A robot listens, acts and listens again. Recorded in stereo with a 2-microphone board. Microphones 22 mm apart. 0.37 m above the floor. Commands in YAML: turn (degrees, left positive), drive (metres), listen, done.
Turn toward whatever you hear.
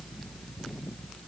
listen: true
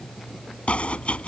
turn: 65
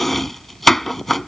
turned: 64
turn: 10
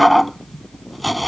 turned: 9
done: "Found it: chopping, straight ahead."